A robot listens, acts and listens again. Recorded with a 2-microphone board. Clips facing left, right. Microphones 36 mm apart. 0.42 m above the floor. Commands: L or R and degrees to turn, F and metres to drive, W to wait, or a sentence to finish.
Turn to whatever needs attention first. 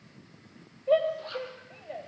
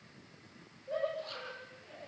L60
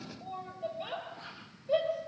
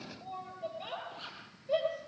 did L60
Found it: a shout, straight ahead, over 4 m away.